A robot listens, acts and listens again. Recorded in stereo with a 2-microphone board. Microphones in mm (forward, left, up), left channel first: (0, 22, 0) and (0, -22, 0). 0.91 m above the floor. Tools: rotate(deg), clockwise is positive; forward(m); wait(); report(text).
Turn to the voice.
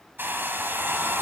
wait()
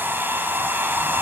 wait()
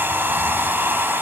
report("I can't make out anyone speaking, only a hair dryer.")